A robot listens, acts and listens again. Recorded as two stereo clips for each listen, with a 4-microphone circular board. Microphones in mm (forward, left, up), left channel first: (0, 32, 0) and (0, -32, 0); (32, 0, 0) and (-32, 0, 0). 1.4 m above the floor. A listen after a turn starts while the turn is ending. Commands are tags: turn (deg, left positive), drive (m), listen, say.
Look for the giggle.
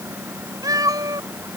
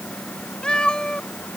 <listen/>
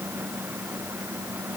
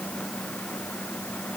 <listen/>
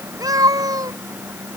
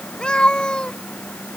<say>I can't make out a giggle, only a cat meowing.</say>